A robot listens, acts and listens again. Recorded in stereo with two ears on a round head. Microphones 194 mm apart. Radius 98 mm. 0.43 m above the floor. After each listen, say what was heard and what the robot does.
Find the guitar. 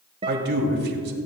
The guitar: about 25° right or 155° right. Turn 25° right.
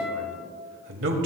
Facing the guitar.